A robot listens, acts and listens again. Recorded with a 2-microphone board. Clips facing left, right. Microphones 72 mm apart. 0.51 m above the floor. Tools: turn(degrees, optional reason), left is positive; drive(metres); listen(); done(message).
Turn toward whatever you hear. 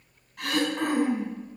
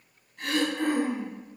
turn(degrees=65, reason="The throat clearing: about 65° left or 115° left.")
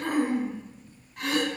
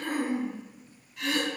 turn(degrees=50, reason="So it is at 50° left.")
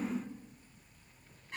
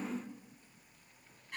turn(degrees=20, reason="The throat clearing is now 20° left.")
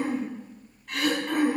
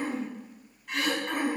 done("Found it: throat clearing, straight ahead.")